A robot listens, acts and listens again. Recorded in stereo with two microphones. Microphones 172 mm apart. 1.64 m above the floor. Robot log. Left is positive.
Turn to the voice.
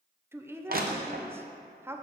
cmd yaw -30
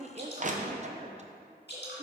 note: So it is at 135° right.
cmd yaw -135
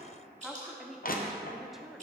end: Facing the woman speaking, under 1 m away.